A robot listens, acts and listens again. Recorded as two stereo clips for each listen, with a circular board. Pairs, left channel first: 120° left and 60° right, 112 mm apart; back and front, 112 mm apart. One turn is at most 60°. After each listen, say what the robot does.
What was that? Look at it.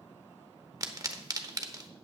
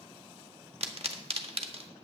Facing the pop.